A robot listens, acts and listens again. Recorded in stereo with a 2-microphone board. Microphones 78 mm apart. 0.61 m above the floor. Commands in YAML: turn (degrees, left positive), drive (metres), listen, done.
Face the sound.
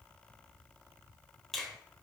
turn: 30
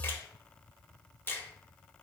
turn: 150
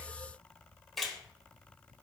done: "Found it: a finger snap, straight ahead, under 1 m away."